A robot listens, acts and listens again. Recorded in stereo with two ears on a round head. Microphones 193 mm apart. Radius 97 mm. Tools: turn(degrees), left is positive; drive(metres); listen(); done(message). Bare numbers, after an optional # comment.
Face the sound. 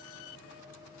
listen()
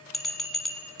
turn(30)
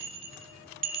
# So it is at 30° right.
turn(-30)
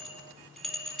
done("Found it: a bell, straight ahead.")